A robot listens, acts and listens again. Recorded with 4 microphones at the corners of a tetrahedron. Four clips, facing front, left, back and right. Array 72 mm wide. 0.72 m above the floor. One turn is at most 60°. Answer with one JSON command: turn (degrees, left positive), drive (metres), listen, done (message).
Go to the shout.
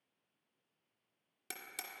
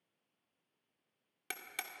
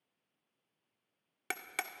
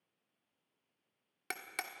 {"listen": true}
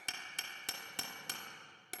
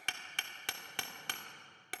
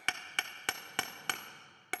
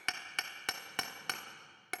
{"listen": true}
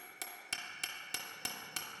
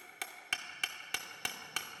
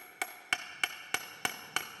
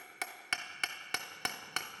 {"done": "I can't make out a shout to turn to."}